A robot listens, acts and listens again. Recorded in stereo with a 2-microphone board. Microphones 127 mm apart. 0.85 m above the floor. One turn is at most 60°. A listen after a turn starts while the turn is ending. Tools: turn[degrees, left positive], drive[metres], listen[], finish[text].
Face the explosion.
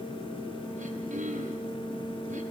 Action: listen[]
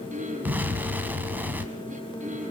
Action: turn[-30]
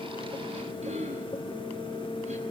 Action: listen[]
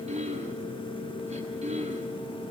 Action: finish[I heard an explosion, but can't make it out now. It was about 15° left or 135° right.]